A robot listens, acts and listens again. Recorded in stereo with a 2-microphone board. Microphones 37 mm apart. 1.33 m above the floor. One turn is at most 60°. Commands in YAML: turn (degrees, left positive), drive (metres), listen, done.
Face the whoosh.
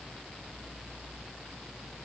listen: true
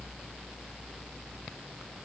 listen: true
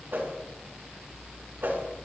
turn: -60
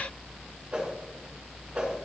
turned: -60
turn: -35
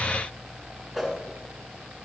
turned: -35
turn: -10
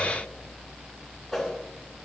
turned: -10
done: "Facing the whoosh, 2 to 4 m away."